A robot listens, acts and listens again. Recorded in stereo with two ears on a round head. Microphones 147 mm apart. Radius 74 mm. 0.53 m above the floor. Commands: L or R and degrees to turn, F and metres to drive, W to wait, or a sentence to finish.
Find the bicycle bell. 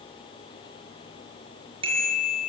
R35
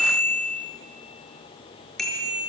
Facing the bicycle bell, over 4 m away.